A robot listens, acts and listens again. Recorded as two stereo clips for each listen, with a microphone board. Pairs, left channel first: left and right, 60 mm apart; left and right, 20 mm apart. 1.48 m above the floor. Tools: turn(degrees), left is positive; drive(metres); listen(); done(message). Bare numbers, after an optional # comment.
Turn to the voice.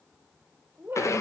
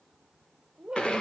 # The woman speaking: about 40° right or 140° right.
turn(-40)
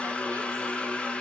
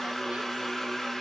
listen()
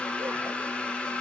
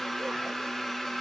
listen()
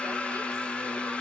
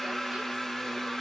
done("I heard a woman speaking, but can't make it out now. It was about straight ahead or 100° right.")